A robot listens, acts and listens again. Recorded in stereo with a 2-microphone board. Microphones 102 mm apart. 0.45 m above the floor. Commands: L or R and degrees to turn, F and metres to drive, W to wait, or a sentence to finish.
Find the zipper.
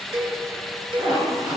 R40
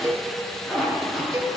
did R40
Found it: a zipper, straight ahead, 2 to 4 m away.